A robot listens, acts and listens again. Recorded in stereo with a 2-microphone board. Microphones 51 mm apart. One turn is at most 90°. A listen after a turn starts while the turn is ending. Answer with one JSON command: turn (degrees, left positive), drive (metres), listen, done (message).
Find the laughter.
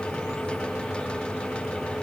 {"listen": true}
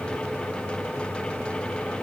{"listen": true}
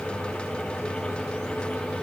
{"done": "I can't make out laughter."}